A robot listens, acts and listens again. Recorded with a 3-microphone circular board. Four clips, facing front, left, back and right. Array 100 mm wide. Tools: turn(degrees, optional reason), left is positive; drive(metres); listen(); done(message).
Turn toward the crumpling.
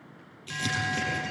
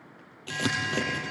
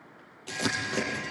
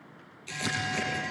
turn(degrees=130, reason="The crumpling: 130° left.")
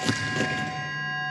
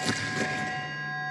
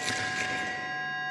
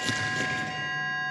done("Facing the crumpling, over 4 m away.")